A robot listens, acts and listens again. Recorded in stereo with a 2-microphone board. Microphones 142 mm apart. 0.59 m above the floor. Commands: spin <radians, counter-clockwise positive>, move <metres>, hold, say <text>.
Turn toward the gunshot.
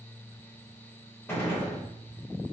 spin 0.26
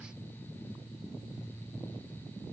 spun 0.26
hold
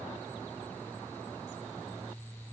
say I heard a gunshot, but can't make it out now. It was about straight ahead or 150° left.